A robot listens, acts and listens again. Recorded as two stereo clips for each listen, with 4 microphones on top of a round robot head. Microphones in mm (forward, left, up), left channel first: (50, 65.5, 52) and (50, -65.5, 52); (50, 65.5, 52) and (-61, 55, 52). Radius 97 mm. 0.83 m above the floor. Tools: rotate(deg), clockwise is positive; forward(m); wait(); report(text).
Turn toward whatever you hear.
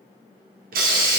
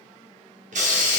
rotate(130)
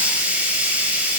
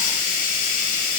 rotate(10)
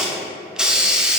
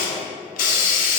report("Found it: a hiss, straight ahead, under 1 m away.")